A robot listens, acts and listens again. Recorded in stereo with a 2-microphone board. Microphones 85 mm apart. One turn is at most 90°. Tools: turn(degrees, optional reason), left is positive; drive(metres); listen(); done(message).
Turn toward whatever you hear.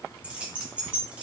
turn(degrees=-30)
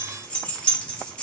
turn(degrees=15, reason="So it is at 15° left.")
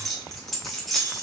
done("Found it: keys jangling, straight ahead, under 1 m away.")